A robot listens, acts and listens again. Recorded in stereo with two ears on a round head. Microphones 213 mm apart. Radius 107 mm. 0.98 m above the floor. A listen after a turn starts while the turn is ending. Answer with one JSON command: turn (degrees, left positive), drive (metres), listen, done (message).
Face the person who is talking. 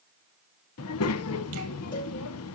{"turn": 70}
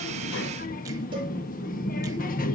{"turn": 35}
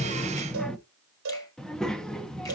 {"done": "Facing the child speaking, under 1 m away."}